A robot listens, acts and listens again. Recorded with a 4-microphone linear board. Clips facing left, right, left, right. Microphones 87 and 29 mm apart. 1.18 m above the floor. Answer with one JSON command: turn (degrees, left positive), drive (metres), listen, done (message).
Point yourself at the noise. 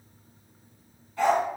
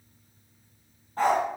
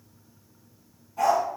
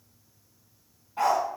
{"turn": -40}
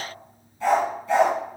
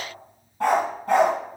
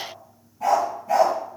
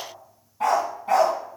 {"turn": -120}
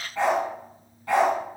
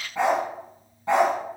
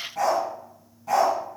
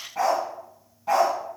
{"turn": -25}
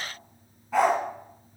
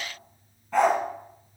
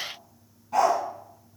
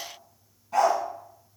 {"done": "Facing the dog barking, 2 to 4 m away."}